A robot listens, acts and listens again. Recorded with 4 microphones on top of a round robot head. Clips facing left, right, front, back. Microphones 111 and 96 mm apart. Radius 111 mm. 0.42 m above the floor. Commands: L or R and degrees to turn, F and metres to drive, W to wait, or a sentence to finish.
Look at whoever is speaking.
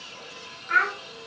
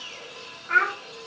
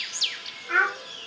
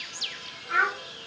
R20
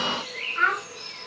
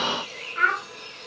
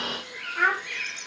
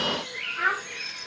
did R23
Facing the child speaking.